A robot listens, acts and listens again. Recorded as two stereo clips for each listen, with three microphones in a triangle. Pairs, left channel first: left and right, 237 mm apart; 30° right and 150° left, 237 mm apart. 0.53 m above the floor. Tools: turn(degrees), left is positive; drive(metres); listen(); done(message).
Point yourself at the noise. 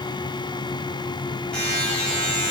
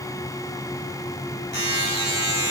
done("Facing the buzzer, 2 to 4 m away.")